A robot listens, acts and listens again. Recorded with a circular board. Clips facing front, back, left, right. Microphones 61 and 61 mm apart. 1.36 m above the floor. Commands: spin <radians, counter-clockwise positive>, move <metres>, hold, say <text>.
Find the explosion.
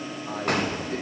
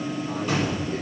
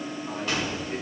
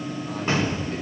spin -0.52
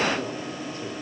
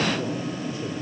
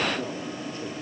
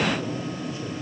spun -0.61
say I heard an explosion from this way, but can't make it out now.